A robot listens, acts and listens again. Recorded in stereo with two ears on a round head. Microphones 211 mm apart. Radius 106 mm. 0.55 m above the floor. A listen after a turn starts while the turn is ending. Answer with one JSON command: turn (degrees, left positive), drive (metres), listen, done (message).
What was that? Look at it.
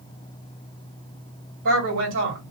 {"turn": -55}
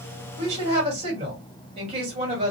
{"turn": -30}
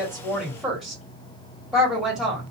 {"done": "Facing the woman speaking, 2 to 4 m away."}